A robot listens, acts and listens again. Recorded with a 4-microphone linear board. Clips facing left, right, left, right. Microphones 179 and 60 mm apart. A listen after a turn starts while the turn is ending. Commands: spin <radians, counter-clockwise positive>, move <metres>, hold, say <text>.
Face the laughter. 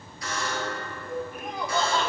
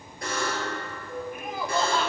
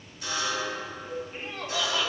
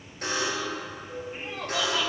spin -0.52
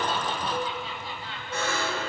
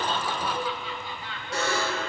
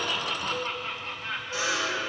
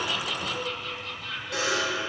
spin 0.61
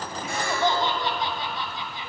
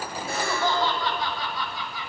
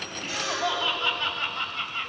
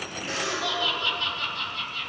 spin 0.52
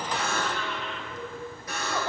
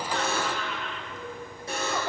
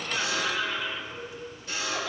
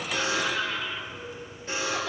say Found it: laughter, straight ahead, 2 to 4 m away.